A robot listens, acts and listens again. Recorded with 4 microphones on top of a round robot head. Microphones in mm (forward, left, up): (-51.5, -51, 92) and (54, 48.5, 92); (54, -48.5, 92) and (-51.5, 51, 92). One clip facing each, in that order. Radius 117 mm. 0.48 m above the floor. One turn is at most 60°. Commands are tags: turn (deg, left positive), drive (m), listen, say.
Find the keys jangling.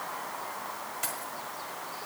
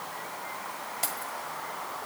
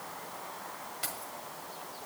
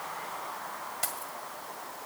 <turn deg="60"/>
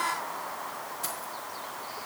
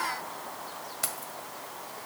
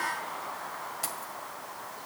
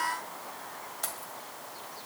<turn deg="40"/>
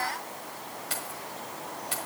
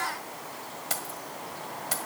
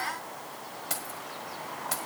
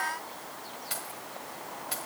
<say>Facing the keys jangling.</say>